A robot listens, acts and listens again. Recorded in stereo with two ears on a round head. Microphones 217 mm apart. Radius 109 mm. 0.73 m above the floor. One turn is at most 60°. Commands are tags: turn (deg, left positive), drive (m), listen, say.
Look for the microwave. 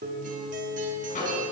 <turn deg="30"/>
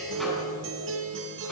<listen/>
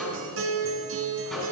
<say>Found it: a microwave, straight ahead.</say>